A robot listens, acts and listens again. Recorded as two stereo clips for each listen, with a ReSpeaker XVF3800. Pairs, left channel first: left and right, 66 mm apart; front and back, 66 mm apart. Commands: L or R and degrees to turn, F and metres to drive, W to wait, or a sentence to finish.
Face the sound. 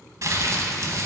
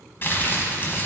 R55
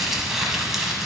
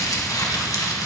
Facing the crumpling, under 1 m away.